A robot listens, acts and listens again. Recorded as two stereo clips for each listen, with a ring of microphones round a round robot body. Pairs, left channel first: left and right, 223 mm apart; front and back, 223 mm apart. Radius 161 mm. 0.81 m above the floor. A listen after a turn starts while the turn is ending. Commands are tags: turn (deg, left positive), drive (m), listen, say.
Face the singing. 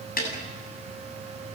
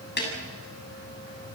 <listen/>
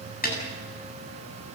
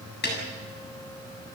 <listen/>
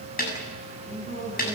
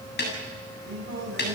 <turn deg="140"/>
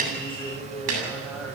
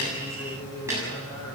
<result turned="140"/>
<say>Found it: singing, straight ahead, over 4 m away.</say>